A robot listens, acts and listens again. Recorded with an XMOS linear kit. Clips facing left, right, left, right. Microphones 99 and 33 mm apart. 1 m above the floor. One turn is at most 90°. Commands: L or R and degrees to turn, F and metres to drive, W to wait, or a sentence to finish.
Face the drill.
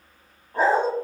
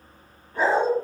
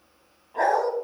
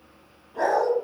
W
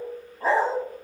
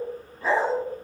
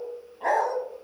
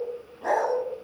W
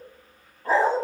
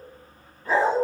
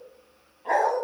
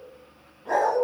I can't make out a drill to turn to.